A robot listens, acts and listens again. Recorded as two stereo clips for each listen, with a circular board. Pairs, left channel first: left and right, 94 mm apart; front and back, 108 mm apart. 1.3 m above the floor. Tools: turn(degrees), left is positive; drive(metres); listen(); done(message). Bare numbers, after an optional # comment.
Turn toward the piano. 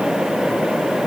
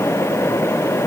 listen()
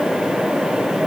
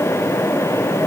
listen()
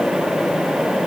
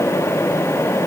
done("I can't make out a piano to turn to.")